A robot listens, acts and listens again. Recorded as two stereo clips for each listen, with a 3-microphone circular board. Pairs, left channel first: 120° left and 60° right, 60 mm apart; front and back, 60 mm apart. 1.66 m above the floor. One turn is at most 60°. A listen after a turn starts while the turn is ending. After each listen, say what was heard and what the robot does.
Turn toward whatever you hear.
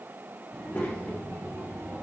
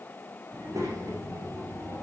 The child speaking: 170° left. Turn 60° left.
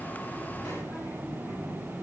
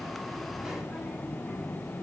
The child speaking is now 90° left. Turn 60° left.
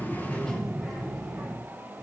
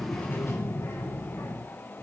The child speaking is now 25° left. Turn 25° left.
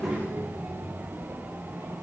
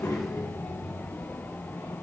Found it: a child speaking, straight ahead, 2 to 4 m away.